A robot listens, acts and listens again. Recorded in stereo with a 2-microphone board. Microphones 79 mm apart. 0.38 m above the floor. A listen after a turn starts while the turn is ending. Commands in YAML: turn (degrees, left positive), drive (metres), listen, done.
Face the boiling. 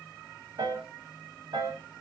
listen: true
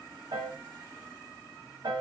listen: true
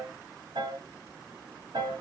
done: "I can't make out boiling to turn to."